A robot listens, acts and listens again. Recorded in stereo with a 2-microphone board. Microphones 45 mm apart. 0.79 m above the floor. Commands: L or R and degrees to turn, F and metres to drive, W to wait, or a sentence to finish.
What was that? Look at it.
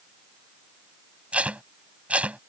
R30
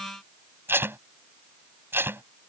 R125
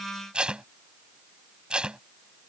R20
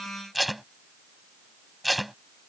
Facing the tape being pulled.